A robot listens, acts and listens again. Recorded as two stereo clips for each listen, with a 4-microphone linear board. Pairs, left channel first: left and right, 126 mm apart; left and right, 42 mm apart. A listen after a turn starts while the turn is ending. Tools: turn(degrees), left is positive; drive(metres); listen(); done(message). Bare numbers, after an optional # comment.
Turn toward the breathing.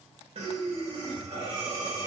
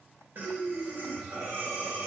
# The breathing: about 55° right or 125° right.
turn(-55)
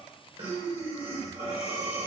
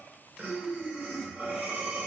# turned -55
# So it is at 55° right.
turn(-55)
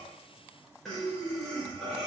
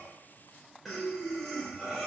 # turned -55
done("Found it: breathing, straight ahead.")